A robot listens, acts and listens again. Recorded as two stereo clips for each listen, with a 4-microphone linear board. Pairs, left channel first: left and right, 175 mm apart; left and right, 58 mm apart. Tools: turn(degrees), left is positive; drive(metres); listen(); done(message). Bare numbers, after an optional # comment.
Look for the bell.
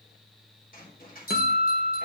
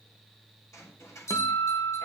# The bell: about 60° left or 120° left.
turn(60)
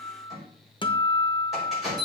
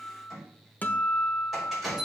done("Facing the bell, over 4 m away.")